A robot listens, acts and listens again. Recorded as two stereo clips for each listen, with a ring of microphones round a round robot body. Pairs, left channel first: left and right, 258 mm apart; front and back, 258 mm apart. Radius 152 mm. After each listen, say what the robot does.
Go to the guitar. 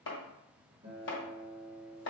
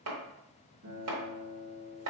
Turn 160° right.
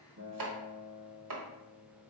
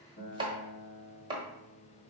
Turn 45° right.
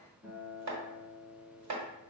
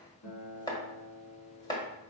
Turn 15° right.
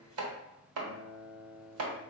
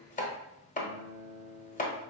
Drive 1.0 m forward.
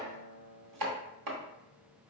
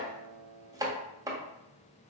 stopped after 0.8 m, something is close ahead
I am next to the guitar.